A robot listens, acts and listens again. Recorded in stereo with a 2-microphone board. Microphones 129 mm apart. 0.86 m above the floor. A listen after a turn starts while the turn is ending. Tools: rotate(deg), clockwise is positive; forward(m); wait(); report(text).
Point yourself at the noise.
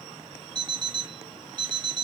rotate(35)
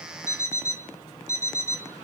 rotate(105)
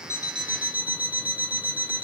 rotate(10)
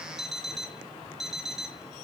report("Found it: an alarm clock, straight ahead.")